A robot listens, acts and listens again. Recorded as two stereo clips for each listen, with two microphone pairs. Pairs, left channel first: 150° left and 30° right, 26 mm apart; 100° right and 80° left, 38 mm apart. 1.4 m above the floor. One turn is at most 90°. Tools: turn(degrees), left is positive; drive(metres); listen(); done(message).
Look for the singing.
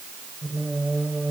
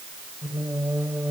turn(degrees=50)
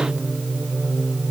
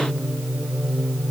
turn(degrees=25)
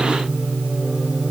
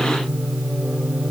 turn(degrees=20)
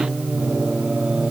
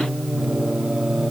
done("Found it: singing, straight ahead.")